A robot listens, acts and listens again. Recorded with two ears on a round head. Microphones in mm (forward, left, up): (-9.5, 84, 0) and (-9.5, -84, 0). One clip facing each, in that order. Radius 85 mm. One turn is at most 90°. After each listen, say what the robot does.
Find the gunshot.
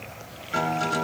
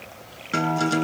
Keep listening.
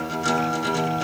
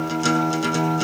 Keep listening.
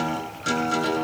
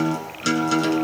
I can't make out a gunshot, only a guitar.